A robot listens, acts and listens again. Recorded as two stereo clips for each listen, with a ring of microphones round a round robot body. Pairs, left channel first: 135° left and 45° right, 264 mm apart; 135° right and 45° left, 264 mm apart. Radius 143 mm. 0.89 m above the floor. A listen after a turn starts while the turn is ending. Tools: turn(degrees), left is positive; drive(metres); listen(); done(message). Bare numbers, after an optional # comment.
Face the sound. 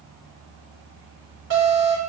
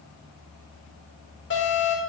# The alarm: 90° right.
turn(-90)
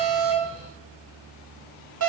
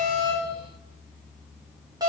# The alarm is now 30° right.
turn(-30)
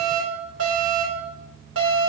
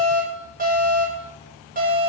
# The alarm is now 15° right.
turn(-15)
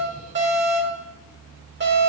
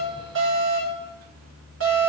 done("Found it: an alarm, straight ahead, over 4 m away.")